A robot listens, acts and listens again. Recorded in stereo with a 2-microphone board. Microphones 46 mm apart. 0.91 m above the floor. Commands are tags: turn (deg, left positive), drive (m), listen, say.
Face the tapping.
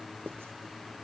<listen/>
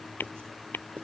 <turn deg="50"/>
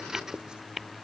<say>Found it: tapping, straight ahead.</say>